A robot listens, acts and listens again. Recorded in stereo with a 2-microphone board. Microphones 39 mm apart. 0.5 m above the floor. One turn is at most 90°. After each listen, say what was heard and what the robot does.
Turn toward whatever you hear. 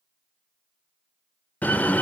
The door slam: about 45° left or 135° left. Turn 45° left.
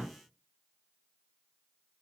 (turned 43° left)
Keep listening.
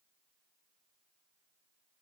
I heard a door slam, but can't make it out now. It was about 5° left or 90° left.